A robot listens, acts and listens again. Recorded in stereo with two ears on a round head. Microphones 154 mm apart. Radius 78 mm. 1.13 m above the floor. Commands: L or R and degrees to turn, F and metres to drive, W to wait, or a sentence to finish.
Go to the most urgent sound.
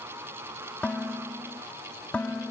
W
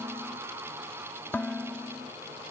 W
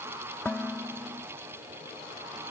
I can't make out anything urgent to turn to.